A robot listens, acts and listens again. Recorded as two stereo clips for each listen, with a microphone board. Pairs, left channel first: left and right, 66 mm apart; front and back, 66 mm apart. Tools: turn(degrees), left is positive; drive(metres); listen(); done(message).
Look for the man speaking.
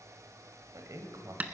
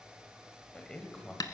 turn(degrees=-75)
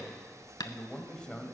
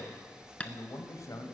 turn(degrees=15)
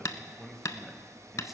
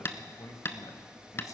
done("Facing the man speaking, 1 to 2 m away.")